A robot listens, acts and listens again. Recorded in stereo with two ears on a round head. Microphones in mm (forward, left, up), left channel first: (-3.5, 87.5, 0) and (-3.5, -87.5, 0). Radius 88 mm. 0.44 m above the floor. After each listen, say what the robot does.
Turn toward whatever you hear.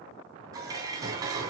Turn 20° right.
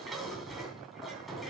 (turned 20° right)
Facing the dishes clattering.